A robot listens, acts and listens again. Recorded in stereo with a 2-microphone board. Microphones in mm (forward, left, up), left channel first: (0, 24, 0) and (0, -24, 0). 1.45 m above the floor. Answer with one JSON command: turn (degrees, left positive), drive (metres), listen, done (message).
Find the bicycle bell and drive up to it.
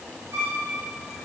{"listen": true}
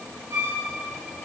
{"listen": true}
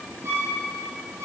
{"done": "I can't make out a bicycle bell, only a violin."}